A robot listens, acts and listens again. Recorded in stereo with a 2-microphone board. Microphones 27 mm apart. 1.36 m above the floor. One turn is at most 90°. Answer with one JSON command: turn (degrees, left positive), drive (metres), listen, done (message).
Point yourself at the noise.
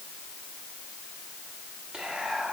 {"turn": -40}
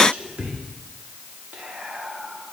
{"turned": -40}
{"turn": -90}
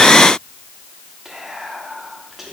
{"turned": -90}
{"turn": -10}
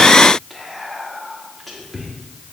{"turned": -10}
{"done": "Facing the whispering, 1 to 2 m away."}